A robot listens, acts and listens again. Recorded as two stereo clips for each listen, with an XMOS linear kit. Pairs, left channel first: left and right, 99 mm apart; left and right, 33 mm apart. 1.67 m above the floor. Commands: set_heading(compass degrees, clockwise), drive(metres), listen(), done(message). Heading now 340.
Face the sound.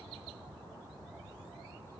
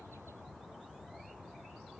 listen()
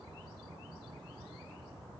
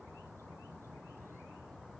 listen()
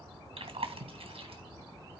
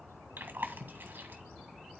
set_heading(50)
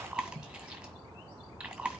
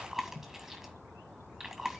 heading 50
done("Found it: chewing, straight ahead, 1 to 2 m away.")